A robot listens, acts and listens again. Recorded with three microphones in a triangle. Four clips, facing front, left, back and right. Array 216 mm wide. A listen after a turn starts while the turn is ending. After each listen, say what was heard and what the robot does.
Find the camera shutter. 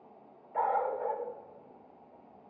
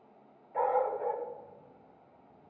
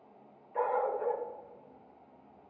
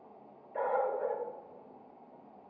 Keep listening.
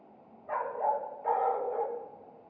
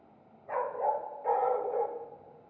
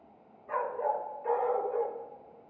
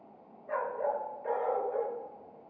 Keep listening.
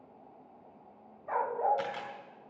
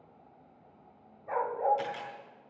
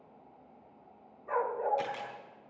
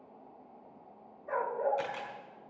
Found it: a camera shutter, straight ahead.